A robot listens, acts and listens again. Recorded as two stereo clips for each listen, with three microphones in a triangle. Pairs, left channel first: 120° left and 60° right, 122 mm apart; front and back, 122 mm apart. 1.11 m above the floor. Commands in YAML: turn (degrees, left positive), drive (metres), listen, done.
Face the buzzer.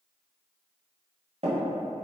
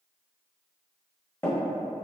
listen: true
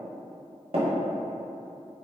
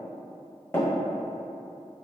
listen: true
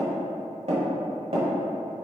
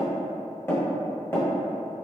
done: "I can't make out a buzzer, only tapping."